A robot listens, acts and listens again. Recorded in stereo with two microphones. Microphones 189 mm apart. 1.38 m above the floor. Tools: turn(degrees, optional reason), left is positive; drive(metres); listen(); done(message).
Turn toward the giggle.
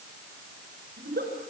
turn(degrees=-60, reason="The giggle: about 60° right or 120° right.")
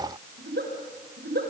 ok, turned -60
turn(degrees=-60, reason="So it is at 60° right.")
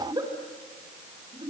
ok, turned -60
turn(degrees=-20, reason="The giggle is now 20° right.")
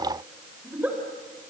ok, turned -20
turn(degrees=-10, reason="The giggle is now 10° right.")
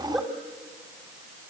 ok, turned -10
done("Facing the giggle.")